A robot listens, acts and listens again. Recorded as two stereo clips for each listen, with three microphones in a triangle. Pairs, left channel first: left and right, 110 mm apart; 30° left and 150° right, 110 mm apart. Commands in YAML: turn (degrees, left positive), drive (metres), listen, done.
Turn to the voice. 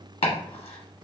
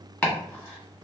listen: true
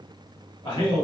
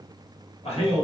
turn: 50
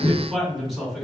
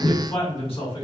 done: "Facing the man speaking, 1 to 2 m away."